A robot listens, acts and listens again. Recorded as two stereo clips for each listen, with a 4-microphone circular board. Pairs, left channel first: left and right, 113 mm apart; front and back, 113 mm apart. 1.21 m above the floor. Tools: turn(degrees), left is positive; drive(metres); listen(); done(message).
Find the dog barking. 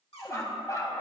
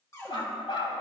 turn(degrees=35)
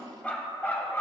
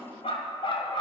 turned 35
turn(degrees=25)
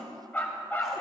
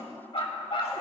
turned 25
turn(degrees=25)
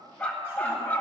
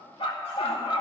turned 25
turn(degrees=20)
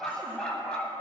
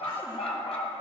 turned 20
turn(degrees=10)
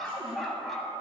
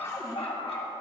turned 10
done("Facing the dog barking.")